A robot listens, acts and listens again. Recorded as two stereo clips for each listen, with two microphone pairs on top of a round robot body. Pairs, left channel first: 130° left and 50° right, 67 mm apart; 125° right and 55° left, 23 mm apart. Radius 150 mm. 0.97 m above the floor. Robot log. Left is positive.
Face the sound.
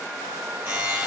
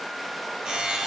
end: Found it: a buzzer, straight ahead.